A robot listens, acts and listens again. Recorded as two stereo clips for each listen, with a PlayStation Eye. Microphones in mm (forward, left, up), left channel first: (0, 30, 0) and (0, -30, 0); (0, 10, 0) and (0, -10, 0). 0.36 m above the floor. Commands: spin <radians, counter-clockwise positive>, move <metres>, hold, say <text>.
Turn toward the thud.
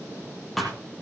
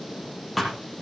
spin 0.52
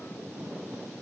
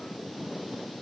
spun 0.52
hold
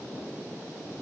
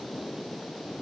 say I heard a thud, but can't make it out now. It was about 30° right or 150° left.